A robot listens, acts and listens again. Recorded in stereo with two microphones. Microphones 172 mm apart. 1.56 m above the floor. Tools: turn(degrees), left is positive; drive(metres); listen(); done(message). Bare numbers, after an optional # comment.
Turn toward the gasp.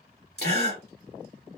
# The gasp: about 75° left or 105° left.
turn(75)
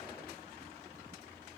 listen()
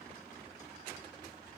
done("I heard a gasp, but can't make it out now. It was about straight ahead or 30° left.")